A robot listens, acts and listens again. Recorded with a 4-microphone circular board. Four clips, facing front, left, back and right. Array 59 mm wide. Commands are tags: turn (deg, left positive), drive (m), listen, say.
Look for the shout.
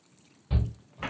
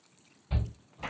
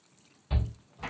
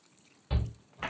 <turn deg="-100"/>
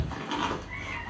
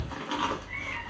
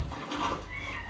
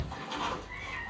<say>Found it: a shout, straight ahead.</say>